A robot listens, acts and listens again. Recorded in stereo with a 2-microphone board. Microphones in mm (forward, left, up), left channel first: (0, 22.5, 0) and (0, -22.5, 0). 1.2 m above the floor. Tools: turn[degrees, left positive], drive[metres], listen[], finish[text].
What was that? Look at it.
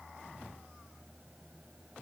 Action: listen[]
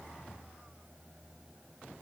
Action: listen[]
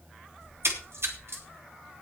Thought: The splash: about 70° right or 110° right.
Action: turn[-70]
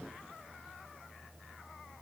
Action: listen[]
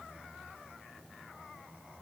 Action: finish[I heard a splash, but can't make it out now. It was about straight ahead or 40° right.]